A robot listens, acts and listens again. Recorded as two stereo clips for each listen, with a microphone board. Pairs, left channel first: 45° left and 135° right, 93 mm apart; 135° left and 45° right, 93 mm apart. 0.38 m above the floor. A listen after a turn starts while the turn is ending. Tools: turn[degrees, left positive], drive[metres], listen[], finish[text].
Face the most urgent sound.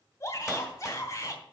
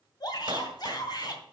Thought: The shout: 100° left.
Action: turn[100]
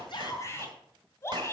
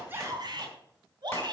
Thought: The shout is now 15° right.
Action: turn[-15]
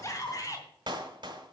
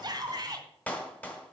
Action: finish[Found it: a shout, straight ahead.]